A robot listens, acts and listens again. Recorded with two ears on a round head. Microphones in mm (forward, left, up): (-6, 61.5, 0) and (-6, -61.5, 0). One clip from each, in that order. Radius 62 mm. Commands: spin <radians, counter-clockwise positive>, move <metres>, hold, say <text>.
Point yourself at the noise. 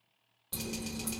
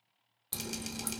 spin -0.52
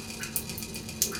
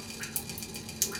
say Found it: dripping, straight ahead.